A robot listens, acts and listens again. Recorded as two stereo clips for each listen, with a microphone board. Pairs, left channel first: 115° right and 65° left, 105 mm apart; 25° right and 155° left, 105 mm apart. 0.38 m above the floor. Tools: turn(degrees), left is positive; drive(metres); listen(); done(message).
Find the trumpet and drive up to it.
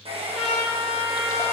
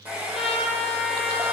turn(degrees=-15)
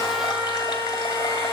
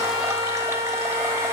drive(metres=1.0)
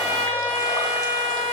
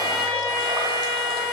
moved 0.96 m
drive(metres=1.0)
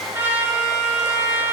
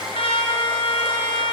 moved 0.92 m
drive(metres=1.0)
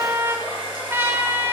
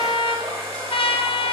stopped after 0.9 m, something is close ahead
done("I am next to the trumpet.")